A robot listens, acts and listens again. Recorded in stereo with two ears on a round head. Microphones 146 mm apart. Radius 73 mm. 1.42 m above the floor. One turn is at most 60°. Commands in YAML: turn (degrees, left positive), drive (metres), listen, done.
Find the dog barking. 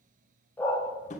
turn: 30
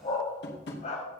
turn: 60
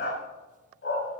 turn: 60
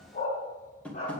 turn: 40
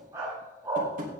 turn: -20
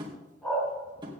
done: "Found it: a dog barking, straight ahead, over 4 m away."